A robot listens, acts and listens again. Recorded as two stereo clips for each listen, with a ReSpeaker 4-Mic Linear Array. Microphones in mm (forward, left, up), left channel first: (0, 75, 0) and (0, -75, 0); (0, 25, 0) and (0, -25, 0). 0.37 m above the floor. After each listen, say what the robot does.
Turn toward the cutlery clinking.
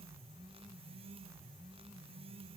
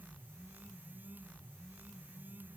Keep listening.
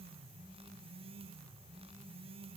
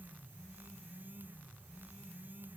Keep listening.
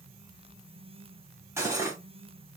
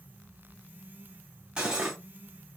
Turn 20° right.
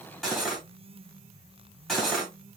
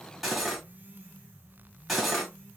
Found it: cutlery clinking, straight ahead, 1 to 2 m away.